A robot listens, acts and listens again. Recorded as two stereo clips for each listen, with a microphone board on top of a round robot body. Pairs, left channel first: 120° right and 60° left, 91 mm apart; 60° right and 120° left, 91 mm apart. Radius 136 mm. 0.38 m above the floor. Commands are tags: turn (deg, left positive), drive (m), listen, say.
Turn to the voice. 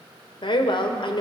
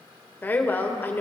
<turn deg="-125"/>
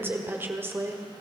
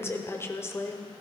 <say>Found it: a woman speaking, straight ahead.</say>